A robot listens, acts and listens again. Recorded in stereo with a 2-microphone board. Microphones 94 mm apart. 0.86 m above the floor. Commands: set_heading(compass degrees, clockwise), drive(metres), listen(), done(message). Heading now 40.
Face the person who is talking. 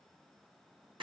listen()
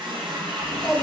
set_heading(10)
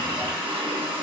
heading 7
set_heading(227)
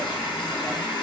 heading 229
listen()
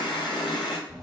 done("Facing the child speaking.")